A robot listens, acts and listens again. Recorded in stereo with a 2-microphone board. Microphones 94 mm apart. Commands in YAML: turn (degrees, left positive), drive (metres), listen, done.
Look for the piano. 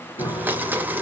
turn: 65
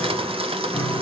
done: "Found it: a piano, straight ahead."